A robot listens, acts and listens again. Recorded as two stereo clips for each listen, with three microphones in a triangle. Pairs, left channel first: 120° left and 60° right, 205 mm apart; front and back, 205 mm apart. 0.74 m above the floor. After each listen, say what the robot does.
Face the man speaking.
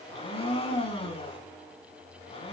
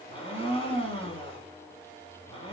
Keep listening.
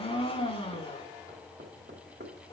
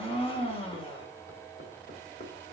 Keep listening.
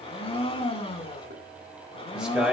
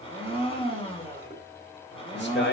Turn 25° left.
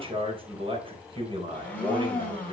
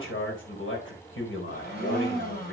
Facing the man speaking.